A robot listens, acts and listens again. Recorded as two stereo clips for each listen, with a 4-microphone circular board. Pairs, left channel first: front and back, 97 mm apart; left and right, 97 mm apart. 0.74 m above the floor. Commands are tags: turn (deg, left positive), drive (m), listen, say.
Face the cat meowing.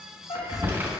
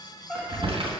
<turn deg="-10"/>
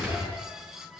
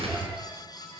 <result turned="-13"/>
<listen/>
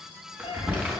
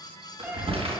<turn deg="-20"/>
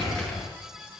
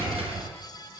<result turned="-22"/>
<listen/>
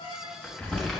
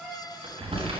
<turn deg="-10"/>
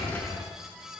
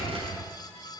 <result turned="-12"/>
<listen/>
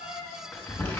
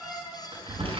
<say>Facing the cat meowing, 2 to 4 m away.</say>